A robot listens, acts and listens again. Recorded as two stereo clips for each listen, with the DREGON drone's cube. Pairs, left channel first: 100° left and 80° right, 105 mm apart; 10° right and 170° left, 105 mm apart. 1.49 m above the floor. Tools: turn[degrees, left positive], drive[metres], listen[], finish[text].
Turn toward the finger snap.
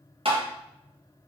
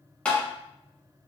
Action: listen[]
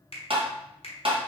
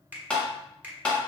Thought: The finger snap: 95° left.
Action: turn[95]
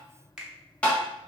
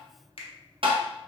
Action: finish[Found it: a finger snap, straight ahead.]